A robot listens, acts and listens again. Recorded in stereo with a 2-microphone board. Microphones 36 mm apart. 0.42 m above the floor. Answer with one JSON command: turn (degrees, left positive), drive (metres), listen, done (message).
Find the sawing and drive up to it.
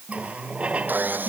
{"turn": -55}
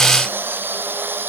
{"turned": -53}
{"turn": -70}
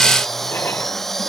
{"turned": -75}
{"drive": 1.0}
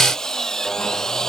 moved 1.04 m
{"turn": 15}
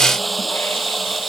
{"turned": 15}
{"drive": 1.0}
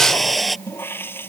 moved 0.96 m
{"drive": 1.0}
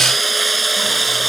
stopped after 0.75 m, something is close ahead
{"done": "I am next to the sawing."}